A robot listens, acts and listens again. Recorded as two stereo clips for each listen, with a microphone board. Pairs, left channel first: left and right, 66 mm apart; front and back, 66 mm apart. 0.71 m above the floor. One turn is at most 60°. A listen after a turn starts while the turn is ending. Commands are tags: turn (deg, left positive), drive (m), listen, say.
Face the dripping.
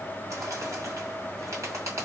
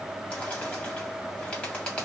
<listen/>
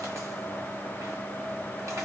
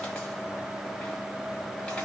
<listen/>
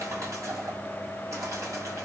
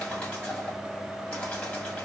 <say>I can't make out dripping, only a bird.</say>